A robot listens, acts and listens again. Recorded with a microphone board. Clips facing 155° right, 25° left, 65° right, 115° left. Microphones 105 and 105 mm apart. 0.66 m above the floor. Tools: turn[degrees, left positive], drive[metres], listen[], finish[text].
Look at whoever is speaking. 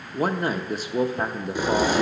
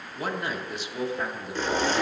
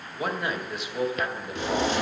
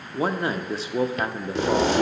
Thought: The man speaking: 165° left.
Action: turn[165]
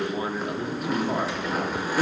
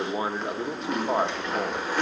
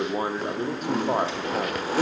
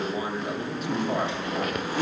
Thought: The man speaking is now 35° right.
Action: turn[-35]
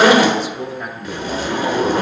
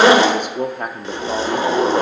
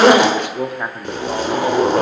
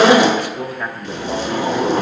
Action: finish[Found it: a man speaking, straight ahead.]